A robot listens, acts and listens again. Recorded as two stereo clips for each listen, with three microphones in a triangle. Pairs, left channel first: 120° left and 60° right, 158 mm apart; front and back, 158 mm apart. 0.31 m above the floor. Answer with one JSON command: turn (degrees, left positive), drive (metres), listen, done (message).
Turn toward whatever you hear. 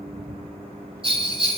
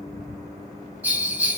{"turn": -105}
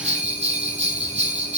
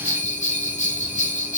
{"turn": -25}
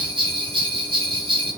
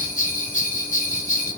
{"turn": -10}
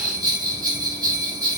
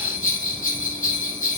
{"done": "Facing the bell, 1 to 2 m away."}